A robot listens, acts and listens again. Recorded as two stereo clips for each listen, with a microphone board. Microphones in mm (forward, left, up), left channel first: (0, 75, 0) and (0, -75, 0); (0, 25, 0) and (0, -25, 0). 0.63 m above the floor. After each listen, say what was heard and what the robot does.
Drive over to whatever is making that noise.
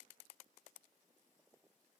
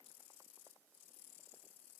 Keep listening.
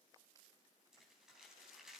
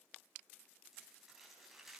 Turn 30° right.
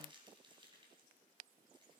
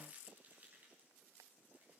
So it is at 150° right. Turn 150° right.
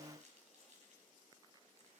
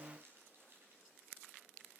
The crumpling is now 50° right. Turn 50° right.
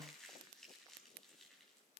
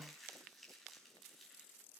Drive 1.0 m forward.
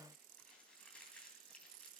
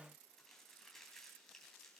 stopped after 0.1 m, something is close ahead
Something is in my way. I am facing the crumpling but have not reached it.